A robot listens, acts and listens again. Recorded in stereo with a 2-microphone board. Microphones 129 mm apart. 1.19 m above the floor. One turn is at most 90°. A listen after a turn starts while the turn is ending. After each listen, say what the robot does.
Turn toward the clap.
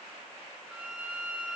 Keep listening.
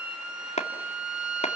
Turn 60° left.
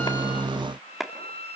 Facing the clap, 2 to 4 m away.